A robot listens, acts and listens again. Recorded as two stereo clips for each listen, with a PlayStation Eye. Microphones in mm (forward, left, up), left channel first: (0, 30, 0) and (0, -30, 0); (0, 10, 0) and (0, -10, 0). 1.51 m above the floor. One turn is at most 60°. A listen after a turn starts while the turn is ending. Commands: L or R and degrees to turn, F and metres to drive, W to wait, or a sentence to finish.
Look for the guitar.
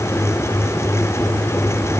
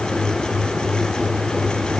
W
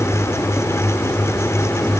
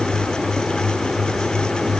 W
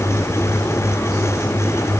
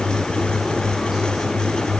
I can't make out a guitar.